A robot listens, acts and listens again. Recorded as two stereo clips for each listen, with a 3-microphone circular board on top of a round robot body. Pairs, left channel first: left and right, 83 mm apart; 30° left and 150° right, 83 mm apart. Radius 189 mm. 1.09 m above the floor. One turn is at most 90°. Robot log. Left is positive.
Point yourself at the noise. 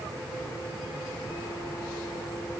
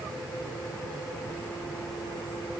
cmd idle
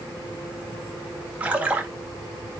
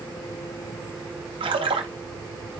note: The splash: 165° right.
cmd yaw -90
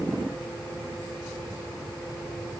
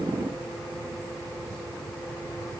note: Nothing new. It was at 75° right.
cmd yaw -75
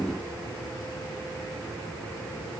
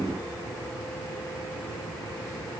end: I heard a splash from this way, but can't make it out now.